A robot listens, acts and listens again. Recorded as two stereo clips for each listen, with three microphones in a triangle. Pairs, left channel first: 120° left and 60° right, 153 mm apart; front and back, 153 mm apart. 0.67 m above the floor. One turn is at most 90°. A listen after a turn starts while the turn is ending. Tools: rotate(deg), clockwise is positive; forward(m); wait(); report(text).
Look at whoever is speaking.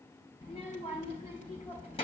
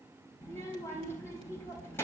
rotate(-70)
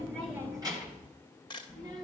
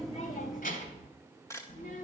report("Facing the child speaking.")